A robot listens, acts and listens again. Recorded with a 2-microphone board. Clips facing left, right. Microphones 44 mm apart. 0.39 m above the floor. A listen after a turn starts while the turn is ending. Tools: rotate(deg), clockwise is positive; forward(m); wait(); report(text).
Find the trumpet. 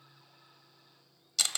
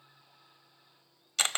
wait()
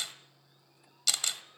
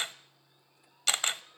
wait()
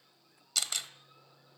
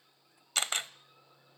report("I can't make out a trumpet, only a camera shutter.")